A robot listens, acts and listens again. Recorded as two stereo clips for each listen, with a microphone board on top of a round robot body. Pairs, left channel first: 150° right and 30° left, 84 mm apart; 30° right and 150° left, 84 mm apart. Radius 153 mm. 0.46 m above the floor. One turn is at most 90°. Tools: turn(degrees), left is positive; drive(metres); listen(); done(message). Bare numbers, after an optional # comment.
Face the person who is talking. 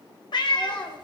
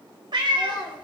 # The child speaking: 70° right.
turn(-70)
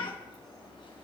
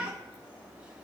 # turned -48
# Nothing new. It was at 20° right.
turn(-20)
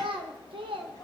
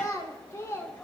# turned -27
# The child speaking is now 30° left.
turn(30)
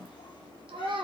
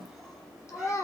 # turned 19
# The child speaking is now 25° left.
turn(25)
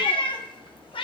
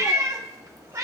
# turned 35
# Nothing new. It was at 10° right.
turn(-10)
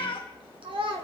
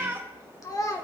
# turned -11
# The child speaking is now 20° left.
turn(20)
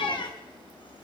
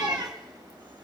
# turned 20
listen()
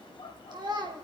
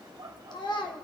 done("Facing the child speaking, 1 to 2 m away.")